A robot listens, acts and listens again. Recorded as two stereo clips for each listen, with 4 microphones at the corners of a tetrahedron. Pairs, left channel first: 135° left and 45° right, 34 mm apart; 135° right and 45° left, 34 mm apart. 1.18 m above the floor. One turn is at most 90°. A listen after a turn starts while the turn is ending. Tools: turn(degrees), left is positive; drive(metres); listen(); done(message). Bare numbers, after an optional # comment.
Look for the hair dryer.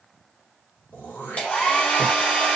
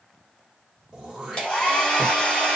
# The hair dryer: 170° left.
turn(90)
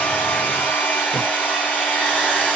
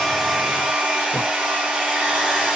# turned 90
# The hair dryer is now 105° left.
turn(90)
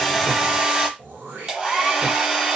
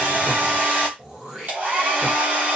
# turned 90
# The hair dryer is now 15° left.
turn(15)
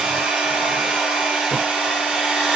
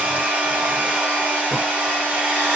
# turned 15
done("Facing the hair dryer.")